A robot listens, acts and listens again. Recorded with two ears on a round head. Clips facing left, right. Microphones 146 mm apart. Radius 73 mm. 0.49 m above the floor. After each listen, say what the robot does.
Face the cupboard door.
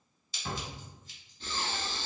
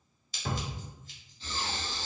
Turn 55° right.
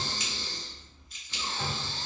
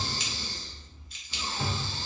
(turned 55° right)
Turn 20° right.
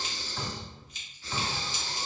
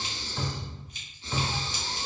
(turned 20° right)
Facing the cupboard door, under 1 m away.